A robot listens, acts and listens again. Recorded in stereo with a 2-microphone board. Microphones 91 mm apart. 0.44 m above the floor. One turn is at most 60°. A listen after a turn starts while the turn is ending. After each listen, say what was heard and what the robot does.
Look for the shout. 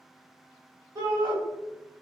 The shout: about 40° right or 140° right. Turn 40° right.
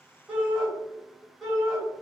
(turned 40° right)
Facing the shout.